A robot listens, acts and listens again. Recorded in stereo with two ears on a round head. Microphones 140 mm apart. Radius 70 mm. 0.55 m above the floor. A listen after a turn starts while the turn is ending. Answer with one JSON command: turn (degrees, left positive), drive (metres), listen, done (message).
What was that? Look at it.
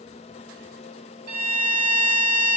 {"turn": -60}
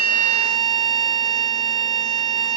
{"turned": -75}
{"turn": -35}
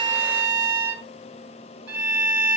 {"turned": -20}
{"turn": -10}
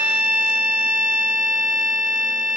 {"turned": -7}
{"done": "Found it: a violin, straight ahead."}